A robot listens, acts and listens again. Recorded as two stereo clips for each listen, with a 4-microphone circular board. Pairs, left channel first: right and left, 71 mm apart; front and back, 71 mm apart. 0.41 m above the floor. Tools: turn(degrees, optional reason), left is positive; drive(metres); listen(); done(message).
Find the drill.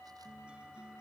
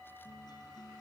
listen()
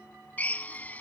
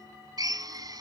turn(degrees=-160, reason="The drill: 160° right.")
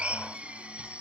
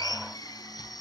turn(degrees=15, reason="The drill is now 15° left.")
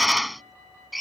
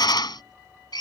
done("Facing the drill.")